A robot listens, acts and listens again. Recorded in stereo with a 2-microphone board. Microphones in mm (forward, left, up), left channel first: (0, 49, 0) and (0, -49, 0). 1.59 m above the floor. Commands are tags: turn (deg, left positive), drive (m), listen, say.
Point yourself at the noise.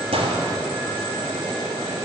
<turn deg="-75"/>
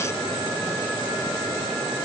<listen/>
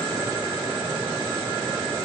<say>I heard a gunshot, but can't make it out now. It was about straight ahead or 30° right.</say>